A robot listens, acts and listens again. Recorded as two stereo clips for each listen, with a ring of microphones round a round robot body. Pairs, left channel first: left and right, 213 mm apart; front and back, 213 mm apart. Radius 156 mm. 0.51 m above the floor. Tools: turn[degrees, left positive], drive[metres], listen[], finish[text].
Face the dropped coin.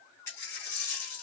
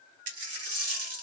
Thought: The dropped coin: 170° left.
Action: turn[170]
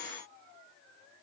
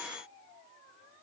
Action: finish[Facing where the dropped coin came from. I can't hear it now.]